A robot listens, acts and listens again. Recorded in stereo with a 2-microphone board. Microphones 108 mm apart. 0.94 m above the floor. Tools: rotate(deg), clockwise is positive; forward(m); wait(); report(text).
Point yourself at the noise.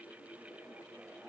wait()
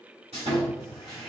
rotate(70)
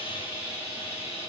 rotate(20)
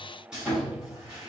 rotate(10)
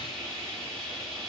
report("Facing the sawing, 2 to 4 m away.")